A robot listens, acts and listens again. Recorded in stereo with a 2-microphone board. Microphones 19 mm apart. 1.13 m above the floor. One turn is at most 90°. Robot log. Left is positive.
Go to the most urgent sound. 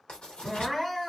cmd yaw +30
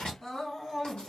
note: So it is at 140° left.
cmd yaw +90
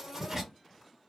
note: Nothing new. It was at 50° left.
cmd yaw +50
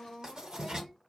note: The crying is now 30° left.
cmd yaw +30
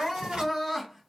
cmd fwd 1.0
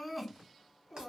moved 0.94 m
note: The crying is now 15° right.
cmd yaw -15
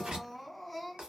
cmd fwd 1.0
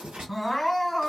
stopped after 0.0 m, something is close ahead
end: Arrived at the crying, straight ahead.